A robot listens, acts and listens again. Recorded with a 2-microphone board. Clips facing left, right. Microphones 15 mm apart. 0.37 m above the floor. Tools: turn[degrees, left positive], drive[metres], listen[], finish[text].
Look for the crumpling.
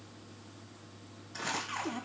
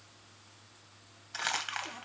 Thought: The crumpling: about 60° right or 120° right.
Action: turn[-60]
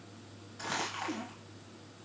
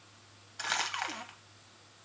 Thought: So it is at 45° right.
Action: turn[-45]
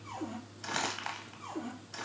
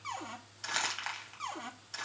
Thought: The crumpling is now 10° right.
Action: turn[-10]
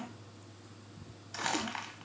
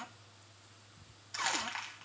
Action: finish[Facing the crumpling, 1 to 2 m away.]